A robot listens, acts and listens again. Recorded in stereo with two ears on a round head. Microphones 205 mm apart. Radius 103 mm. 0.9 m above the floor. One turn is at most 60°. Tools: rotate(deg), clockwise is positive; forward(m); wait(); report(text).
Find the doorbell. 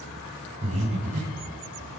wait()
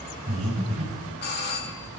rotate(-45)
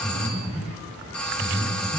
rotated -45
report("Found it: a doorbell, straight ahead.")